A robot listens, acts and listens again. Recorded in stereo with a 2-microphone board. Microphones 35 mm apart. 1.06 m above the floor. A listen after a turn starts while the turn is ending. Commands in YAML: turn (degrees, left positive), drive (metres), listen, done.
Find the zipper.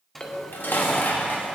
turn: 30
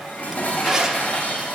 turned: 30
turn: -20
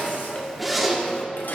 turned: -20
done: "Found it: a zipper, straight ahead, under 1 m away."